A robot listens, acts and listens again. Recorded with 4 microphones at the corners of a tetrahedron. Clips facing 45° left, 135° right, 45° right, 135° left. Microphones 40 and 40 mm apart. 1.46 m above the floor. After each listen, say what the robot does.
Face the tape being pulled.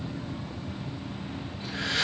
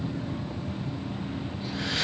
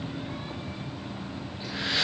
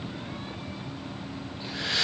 Keep listening.
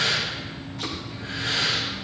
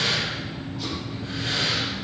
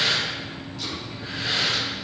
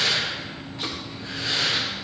Keep listening.
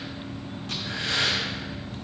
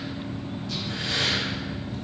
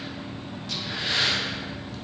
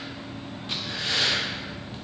I can't make out tape being pulled to turn to.